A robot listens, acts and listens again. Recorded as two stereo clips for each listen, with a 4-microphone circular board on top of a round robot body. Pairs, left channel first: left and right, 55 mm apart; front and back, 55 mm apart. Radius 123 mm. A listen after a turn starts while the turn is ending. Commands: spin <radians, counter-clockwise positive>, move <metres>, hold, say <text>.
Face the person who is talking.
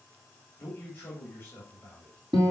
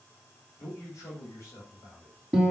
spin 0.52
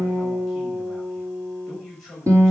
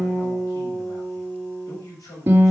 say Found it: a man speaking, straight ahead.